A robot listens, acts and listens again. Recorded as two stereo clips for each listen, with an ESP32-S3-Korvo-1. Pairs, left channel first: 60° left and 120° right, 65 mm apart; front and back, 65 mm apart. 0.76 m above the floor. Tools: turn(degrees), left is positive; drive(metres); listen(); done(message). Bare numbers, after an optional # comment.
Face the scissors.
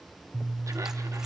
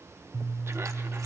# The scissors: 160° left.
turn(160)
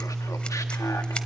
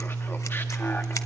# The scissors is now 10° right.
turn(-10)
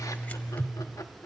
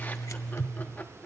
done("Facing the scissors.")